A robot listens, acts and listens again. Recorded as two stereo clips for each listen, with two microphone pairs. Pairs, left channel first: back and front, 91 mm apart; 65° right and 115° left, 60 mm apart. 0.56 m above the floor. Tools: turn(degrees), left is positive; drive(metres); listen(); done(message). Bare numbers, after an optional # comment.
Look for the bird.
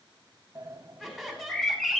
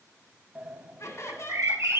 # The bird: 95° left.
turn(95)
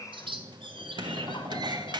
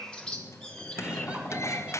# The bird is now 10° left.
turn(10)
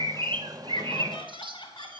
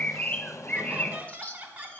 done("Found it: a bird, straight ahead.")